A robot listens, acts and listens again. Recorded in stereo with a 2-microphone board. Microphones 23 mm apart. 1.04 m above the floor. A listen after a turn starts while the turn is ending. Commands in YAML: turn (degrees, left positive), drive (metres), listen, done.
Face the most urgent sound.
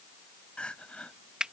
turn: 65
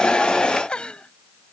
turn: 50
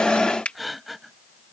done: "Facing the crying."